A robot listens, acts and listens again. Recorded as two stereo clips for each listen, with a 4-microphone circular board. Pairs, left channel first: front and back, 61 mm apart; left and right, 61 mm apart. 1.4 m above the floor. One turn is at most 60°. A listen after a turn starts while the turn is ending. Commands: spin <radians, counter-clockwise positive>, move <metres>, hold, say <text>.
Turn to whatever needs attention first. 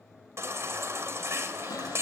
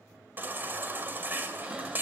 spin -1.05
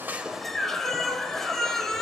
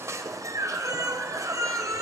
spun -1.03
spin -1.05
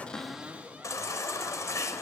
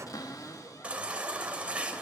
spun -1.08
spin -0.35
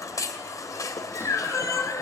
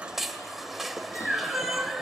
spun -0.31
say Found it: a baby crying, straight ahead.